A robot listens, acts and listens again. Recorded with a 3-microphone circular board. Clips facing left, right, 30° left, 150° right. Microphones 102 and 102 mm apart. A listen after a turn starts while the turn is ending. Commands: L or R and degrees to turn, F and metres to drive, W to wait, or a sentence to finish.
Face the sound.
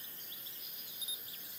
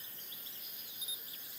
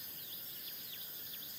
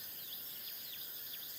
W
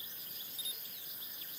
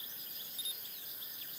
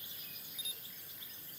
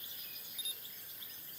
W
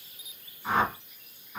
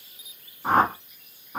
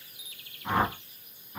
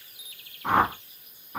R135
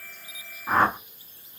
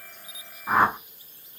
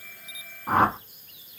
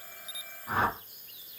Facing the whoosh.